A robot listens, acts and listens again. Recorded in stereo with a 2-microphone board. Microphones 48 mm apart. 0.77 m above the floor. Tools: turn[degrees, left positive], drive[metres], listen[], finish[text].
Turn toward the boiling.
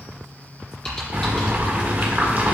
Thought: The boiling: about 35° right or 145° right.
Action: turn[-35]
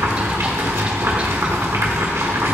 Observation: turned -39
Thought: So it is at 105° right.
Action: turn[-105]
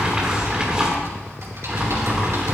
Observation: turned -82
Thought: The boiling is now 20° right.
Action: turn[-20]
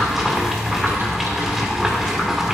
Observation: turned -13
Action: finish[Facing the boiling.]